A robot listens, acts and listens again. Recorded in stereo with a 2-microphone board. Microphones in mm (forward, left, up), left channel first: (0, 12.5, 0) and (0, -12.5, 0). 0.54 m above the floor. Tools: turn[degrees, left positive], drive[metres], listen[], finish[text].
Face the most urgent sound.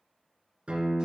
Action: listen[]
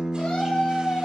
Thought: The scream: about 50° left or 130° left.
Action: turn[50]
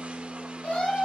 Thought: So it is at 80° left.
Action: turn[80]
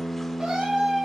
Thought: The scream is now 25° right.
Action: turn[-25]
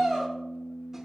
Action: finish[Found it: a scream, straight ahead, 2 to 4 m away.]